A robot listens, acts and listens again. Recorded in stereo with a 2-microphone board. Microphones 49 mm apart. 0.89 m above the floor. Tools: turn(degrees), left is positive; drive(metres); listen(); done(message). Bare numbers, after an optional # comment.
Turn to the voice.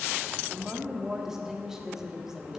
turn(-30)
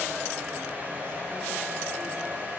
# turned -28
listen()
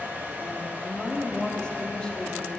# So it is at 20° left.
turn(20)
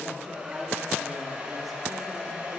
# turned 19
listen()
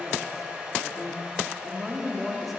done("Facing the woman speaking.")